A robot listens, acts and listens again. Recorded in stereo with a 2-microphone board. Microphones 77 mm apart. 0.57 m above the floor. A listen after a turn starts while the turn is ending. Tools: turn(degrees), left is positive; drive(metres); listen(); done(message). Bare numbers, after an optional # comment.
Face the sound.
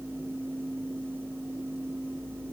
listen()
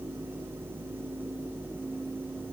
listen()
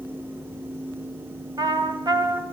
# The trumpet: about 65° right or 115° right.
turn(-65)
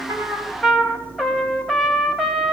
done("Found it: a trumpet, straight ahead, 2 to 4 m away.")